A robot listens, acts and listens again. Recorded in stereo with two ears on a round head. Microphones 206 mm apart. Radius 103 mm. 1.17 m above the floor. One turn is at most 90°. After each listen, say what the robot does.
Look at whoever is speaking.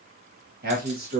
Turn 45° right.
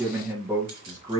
Turn 20° right.
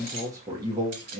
Turn 25° right.
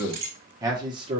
Turn 25° right.
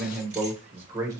Turn 15° right.
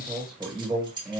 Facing the man speaking, 1 to 2 m away.